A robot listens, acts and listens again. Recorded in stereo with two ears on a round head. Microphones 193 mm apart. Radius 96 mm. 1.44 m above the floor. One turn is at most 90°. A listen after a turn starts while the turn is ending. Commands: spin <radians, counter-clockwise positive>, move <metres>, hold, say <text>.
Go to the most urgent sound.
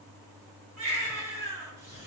spin -0.70
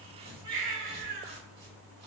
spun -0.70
spin -1.57
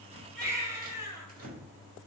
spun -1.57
spin -0.26
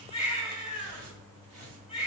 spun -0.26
move 1.0
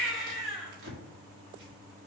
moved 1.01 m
move 1.0
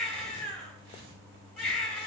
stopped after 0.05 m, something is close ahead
say Arrived at the baby crying, straight ahead.